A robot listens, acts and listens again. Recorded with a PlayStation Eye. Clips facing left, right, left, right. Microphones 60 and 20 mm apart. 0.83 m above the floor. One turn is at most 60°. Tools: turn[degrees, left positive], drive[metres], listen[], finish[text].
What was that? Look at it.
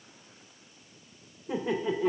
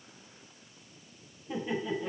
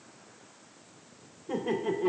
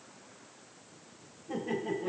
Action: turn[60]
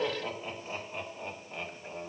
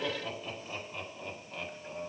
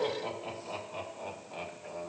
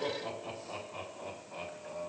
Thought: So it is at 25° left.
Action: turn[25]
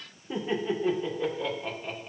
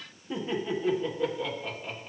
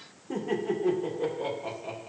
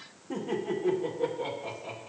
Action: finish[Facing the laughter.]